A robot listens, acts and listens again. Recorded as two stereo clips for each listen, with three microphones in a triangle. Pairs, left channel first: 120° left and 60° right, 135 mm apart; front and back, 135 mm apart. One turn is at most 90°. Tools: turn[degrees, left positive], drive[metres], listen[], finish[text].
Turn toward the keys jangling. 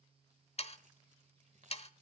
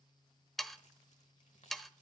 Thought: The keys jangling: 30° right.
Action: turn[-30]
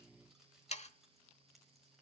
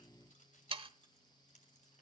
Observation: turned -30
Thought: The keys jangling is now 30° left.
Action: turn[30]
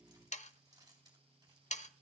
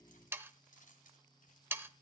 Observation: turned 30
Action: finish[Facing the keys jangling.]